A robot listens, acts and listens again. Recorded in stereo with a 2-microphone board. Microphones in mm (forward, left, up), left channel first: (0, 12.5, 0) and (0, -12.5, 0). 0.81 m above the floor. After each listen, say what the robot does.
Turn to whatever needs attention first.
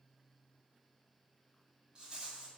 Keep listening.
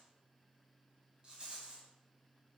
Keep listening.
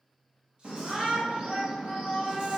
Turn 55° right.
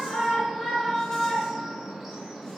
Turn 10° right.
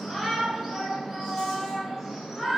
Facing the shout, under 1 m away.